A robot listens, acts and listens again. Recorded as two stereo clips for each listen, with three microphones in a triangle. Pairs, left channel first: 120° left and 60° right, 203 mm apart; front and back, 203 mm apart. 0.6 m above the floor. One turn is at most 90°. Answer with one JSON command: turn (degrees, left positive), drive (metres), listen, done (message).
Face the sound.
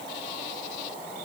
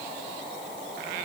{"listen": true}
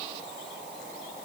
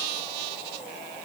{"listen": true}
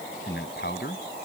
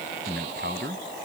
{"turn": 90}
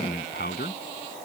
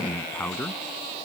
{"turn": 85}
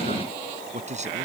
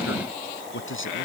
{"done": "Found it: a man speaking, straight ahead."}